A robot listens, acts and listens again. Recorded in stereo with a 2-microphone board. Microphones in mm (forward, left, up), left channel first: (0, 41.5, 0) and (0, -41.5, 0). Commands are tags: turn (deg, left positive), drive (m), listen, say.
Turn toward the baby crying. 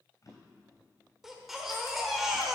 <turn deg="-30"/>
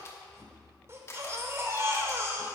<turn deg="-145"/>
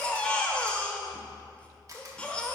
<turn deg="15"/>
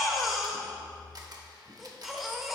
<say>Facing the baby crying.</say>